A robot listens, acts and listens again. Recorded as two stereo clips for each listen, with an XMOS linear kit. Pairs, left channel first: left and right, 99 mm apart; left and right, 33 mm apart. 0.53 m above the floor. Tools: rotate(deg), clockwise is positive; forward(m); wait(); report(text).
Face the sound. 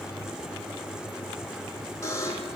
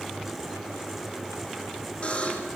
rotate(-30)
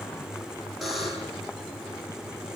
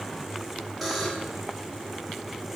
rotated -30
report("Found it: a buzzer, straight ahead, over 4 m away.")